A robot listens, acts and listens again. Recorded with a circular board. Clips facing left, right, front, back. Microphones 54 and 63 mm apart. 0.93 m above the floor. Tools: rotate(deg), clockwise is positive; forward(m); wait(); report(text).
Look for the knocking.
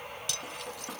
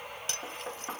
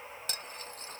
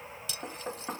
rotate(150)
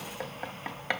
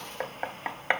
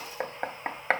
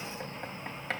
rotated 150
rotate(30)
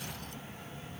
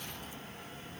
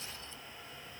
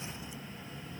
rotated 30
wait()
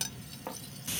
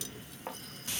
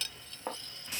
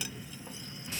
report("Found it: knocking, straight ahead.")